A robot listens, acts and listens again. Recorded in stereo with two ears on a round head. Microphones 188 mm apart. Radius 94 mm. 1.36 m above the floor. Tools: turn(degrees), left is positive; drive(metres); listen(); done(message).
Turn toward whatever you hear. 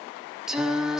turn(degrees=-30)
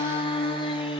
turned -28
turn(degrees=25)
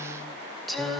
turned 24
done("Facing the singing.")